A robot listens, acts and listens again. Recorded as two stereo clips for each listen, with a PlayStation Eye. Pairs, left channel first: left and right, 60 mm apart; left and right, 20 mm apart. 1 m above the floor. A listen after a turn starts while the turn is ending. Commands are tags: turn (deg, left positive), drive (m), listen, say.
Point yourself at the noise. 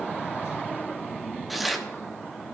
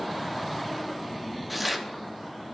<turn deg="30"/>
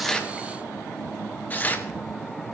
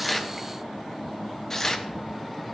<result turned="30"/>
<turn deg="150"/>
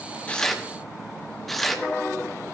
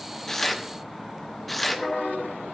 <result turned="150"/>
<say>Facing the tearing paper.</say>